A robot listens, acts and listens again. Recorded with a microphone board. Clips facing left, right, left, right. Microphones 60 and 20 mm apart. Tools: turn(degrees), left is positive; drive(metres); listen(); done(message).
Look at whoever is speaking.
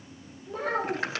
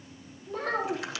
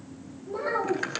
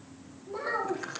turn(degrees=30)
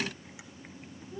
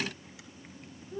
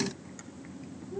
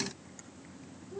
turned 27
turn(degrees=-25)
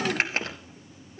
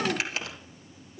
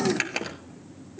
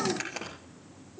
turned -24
listen()
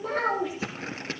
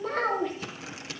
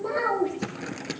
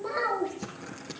done("Facing the child speaking, over 4 m away.")